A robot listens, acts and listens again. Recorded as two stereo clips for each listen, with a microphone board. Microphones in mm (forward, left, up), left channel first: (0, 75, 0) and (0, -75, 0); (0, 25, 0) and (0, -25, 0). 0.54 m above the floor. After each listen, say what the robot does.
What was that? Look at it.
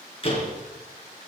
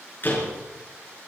Turn 40° left.
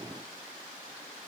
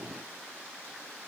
Keep listening.
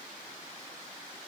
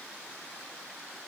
I heard a door slam, but can't make it out now. It was about straight ahead or 100° left.